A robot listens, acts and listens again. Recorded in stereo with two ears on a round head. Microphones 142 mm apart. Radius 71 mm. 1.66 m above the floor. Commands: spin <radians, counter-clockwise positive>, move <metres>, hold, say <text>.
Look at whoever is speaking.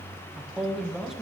spin 0.52
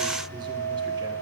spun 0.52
hold
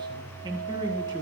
spin -0.52
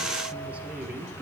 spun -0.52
hold
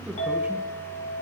hold
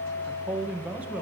spin -0.17
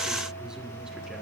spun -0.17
hold
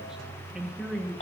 say Found it: a man speaking, straight ahead, 1 to 2 m away.